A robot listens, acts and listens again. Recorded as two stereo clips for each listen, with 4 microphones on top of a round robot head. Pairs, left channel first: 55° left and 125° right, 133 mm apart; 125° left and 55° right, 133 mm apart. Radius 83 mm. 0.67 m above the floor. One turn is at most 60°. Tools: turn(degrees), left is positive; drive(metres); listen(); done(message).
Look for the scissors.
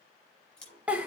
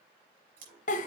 turn(degrees=-30)
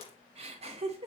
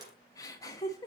listen()
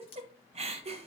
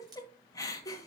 done("Found it: scissors, straight ahead.")